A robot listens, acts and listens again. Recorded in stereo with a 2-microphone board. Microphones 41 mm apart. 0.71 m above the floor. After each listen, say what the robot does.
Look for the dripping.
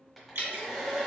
Turn 75° right.
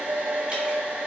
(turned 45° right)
Keep listening.
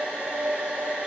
Keep listening.
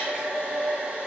I heard dripping, but can't make it out now. It was about 30° right or 60° right.